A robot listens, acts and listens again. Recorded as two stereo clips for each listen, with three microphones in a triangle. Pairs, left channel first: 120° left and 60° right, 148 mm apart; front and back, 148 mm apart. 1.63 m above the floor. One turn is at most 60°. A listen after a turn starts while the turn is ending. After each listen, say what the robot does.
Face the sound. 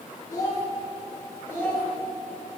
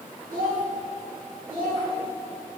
Turn 60° right.
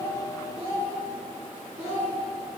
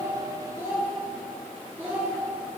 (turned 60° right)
Turn 60° right.
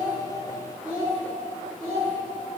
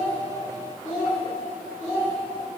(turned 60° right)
Turn 35° right.
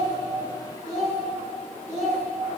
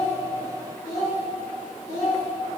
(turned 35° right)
Turn 10° left.
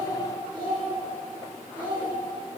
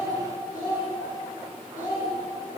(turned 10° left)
Found it: a child speaking, straight ahead.